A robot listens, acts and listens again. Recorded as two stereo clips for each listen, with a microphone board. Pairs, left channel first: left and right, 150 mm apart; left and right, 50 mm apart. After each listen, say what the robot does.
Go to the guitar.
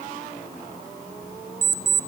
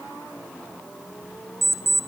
Keep listening.
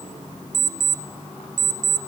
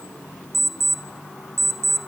Keep listening.
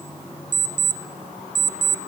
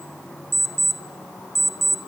I can't make out a guitar, only an alarm clock.